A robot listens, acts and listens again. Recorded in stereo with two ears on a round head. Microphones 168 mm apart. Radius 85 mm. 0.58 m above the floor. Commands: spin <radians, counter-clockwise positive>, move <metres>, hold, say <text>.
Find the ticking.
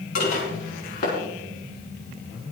hold
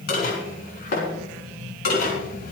hold
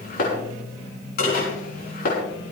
say I can't make out ticking to turn to.